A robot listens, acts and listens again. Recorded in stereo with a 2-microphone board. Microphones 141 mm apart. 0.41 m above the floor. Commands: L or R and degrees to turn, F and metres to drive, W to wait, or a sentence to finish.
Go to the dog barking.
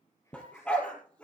L30
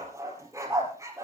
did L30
R20
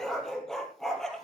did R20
F1.0
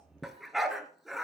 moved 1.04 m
F1.0
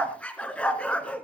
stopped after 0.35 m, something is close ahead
L10
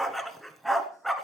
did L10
I am next to the dog barking.